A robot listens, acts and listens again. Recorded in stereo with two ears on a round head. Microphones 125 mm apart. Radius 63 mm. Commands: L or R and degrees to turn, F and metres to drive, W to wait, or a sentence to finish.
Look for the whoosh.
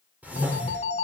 R30
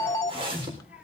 R140
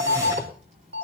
R20
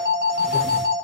W
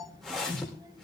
Found it: a whoosh, straight ahead, over 4 m away.